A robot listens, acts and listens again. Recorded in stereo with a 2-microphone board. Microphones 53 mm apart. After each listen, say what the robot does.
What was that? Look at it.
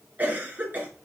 Turn 30° right.
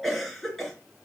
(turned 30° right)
Facing the cough.